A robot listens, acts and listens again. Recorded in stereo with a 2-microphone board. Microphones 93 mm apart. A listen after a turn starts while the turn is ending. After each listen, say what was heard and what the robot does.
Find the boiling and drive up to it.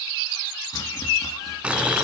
Turn 30° right.
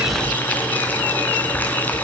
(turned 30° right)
So it is at 20° left. Turn 20° left.
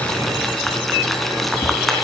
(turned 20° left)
Drive 1.0 m forward.
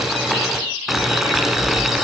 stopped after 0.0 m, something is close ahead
Blocked. The boiling is further on, straight ahead.